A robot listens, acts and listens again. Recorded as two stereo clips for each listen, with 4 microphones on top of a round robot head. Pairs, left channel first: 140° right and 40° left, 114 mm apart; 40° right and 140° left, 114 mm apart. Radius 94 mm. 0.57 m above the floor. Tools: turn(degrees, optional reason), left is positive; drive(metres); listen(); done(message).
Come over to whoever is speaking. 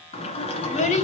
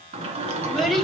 turn(degrees=-130, reason="The child speaking: 130° right.")
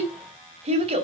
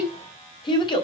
turn(degrees=10, reason="The child speaking is now 10° left.")
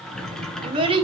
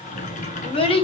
drive(metres=1.0)
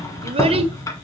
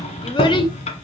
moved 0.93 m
listen()
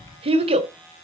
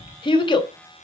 drive(metres=1.0)
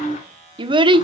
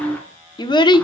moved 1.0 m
drive(metres=1.0)
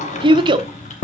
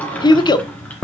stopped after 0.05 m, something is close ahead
done("Arrived at the child speaking, straight ahead.")